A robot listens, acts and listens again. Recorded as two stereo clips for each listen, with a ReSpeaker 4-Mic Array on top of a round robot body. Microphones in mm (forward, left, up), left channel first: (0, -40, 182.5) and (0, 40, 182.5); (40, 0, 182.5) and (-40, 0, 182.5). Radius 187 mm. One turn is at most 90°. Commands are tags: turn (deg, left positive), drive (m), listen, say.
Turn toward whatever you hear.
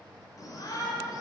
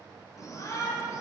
<turn deg="-50"/>
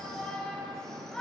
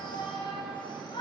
<say>Facing the shout, 2 to 4 m away.</say>